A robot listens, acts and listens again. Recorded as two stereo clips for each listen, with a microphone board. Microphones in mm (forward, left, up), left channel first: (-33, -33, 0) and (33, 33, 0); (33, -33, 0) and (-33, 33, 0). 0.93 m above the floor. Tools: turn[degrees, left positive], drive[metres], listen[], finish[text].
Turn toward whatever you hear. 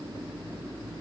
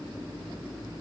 Action: listen[]
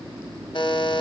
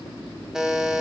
Thought: The buzzer: 140° right.
Action: turn[-140]
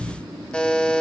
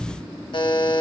Thought: The buzzer is now 60° right.
Action: turn[-60]
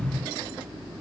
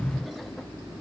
Action: listen[]
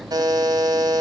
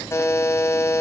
Thought: The buzzer is now 10° left.
Action: turn[10]
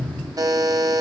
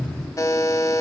Action: finish[Facing the buzzer.]